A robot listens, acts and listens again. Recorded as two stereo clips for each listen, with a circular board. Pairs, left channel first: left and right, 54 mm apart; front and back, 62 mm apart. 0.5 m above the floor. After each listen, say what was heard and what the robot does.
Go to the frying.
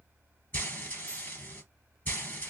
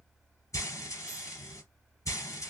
The frying: 40° left. Turn 40° left.
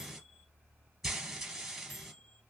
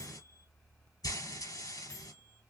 Drive 1.0 m forward.
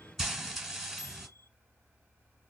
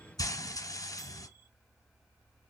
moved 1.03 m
Drive 1.0 m forward.
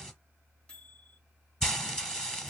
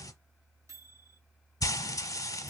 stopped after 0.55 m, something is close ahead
The frying is now 10° left. Turn 10° left.
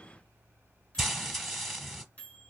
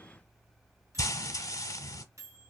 Arrived at the frying, straight ahead.